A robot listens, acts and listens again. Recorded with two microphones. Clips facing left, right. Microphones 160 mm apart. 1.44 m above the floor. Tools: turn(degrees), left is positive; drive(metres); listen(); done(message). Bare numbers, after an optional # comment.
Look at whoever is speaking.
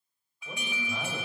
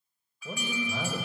# The man speaking: about 45° right or 135° right.
turn(-45)
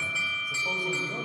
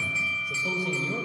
# So it is at 90° right.
turn(-90)
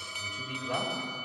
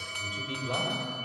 # The man speaking is now 20° right.
turn(-20)
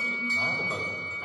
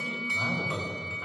done("Facing the man speaking.")